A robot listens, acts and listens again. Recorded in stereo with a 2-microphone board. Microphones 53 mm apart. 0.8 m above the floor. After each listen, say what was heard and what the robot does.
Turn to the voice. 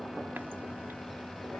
Keep listening.
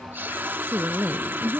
The woman speaking: about 40° right or 140° right. Turn 40° right.
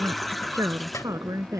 So it is at 100° right. Turn 100° right.
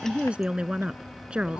The woman speaking is now 20° right. Turn 20° right.
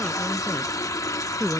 The woman speaking is now 10° right. Turn 10° right.
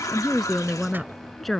Found it: a woman speaking, straight ahead.